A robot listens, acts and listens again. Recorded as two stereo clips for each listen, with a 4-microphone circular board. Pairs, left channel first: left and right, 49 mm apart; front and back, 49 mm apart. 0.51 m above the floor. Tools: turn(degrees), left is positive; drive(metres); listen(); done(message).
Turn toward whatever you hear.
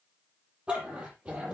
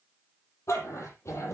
turn(degrees=-30)
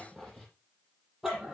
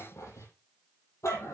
turn(degrees=-10)
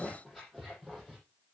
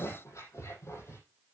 done("Found it: a dog barking, straight ahead.")